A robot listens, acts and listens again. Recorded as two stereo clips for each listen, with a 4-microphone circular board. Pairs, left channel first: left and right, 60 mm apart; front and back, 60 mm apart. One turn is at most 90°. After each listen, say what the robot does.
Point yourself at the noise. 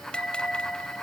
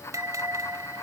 Turn 90° left.
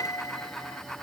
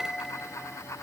Turn 90° left.
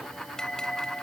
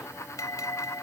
Turn 15° left.
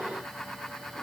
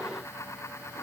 Keep listening.
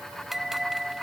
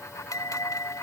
Facing the bell.